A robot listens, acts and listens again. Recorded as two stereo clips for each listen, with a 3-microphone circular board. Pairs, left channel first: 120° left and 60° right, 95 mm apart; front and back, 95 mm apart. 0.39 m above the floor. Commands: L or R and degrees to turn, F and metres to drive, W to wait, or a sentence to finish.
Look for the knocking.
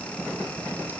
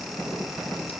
W
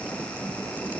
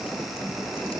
W
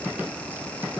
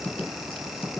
I can't make out knocking to turn to.